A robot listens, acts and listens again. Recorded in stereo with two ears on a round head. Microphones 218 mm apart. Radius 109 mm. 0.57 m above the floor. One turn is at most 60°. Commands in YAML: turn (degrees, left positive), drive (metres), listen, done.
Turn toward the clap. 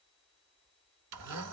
listen: true
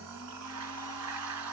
listen: true
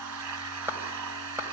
turn: -30
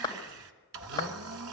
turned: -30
turn: 20
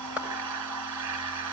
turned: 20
done: "Facing the clap, 2 to 4 m away."